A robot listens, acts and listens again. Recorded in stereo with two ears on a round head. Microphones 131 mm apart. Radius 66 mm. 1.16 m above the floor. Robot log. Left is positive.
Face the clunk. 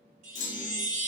note: The clunk: about 55° left or 125° left.
cmd yaw +55
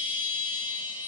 cmd idle
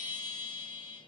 end: I heard a clunk, but can't make it out now. It was about straight ahead or 70° left.